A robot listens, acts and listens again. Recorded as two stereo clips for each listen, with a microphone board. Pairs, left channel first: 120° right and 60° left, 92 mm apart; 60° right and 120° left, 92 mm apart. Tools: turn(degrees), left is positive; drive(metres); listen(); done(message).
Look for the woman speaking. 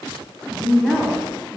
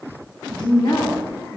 turn(degrees=-30)
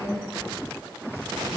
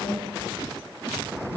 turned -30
turn(degrees=10)
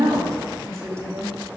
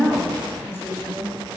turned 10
done("Facing the woman speaking.")